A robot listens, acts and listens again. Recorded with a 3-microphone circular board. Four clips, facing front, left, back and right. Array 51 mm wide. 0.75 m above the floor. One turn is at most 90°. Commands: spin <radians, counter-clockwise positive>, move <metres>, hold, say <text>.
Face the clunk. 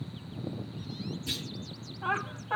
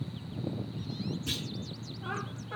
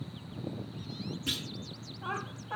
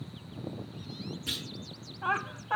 spin 1.57
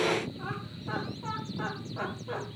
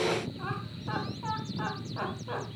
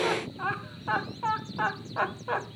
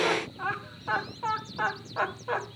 spin 1.57
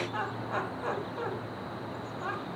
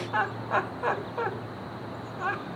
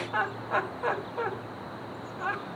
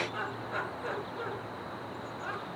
say I heard a clunk from this way, but can't make it out now.